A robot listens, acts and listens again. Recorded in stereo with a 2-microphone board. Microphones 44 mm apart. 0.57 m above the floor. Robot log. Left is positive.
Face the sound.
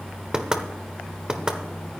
note: The knocking: about 15° right or 165° right.
cmd yaw -15
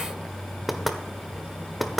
end: Facing the knocking, 1 to 2 m away.